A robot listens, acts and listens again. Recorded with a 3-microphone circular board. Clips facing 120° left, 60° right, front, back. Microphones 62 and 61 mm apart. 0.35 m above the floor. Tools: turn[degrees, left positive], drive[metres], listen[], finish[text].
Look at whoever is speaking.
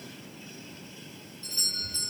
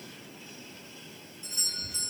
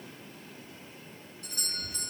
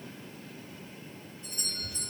Thought: The child speaking: 60° right.
Action: turn[-60]
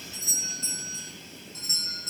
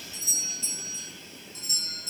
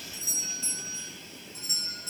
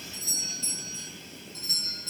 Action: finish[Found it: a child speaking, straight ahead.]